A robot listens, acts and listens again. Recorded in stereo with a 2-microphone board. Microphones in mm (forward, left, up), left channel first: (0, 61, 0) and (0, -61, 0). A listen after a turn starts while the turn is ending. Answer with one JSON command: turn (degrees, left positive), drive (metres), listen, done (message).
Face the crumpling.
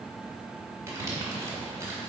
{"turn": -25}
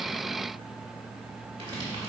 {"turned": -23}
{"turn": -130}
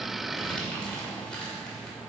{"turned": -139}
{"turn": 10}
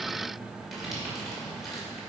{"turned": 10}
{"done": "Facing the crumpling."}